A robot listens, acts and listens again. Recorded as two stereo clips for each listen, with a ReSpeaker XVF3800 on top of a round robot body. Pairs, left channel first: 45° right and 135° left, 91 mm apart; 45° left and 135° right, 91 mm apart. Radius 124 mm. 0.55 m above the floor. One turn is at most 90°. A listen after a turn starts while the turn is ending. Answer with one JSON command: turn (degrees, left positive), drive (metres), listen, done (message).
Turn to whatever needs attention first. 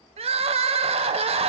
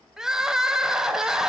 {"turn": 90}
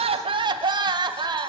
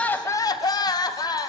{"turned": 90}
{"turn": 90}
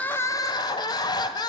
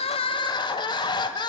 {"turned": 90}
{"done": "Facing the crying."}